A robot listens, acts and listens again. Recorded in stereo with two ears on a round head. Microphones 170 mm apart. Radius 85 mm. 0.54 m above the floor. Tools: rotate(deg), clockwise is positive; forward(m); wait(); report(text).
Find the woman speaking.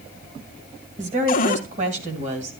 rotate(40)
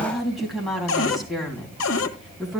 report("Facing the woman speaking, 2 to 4 m away.")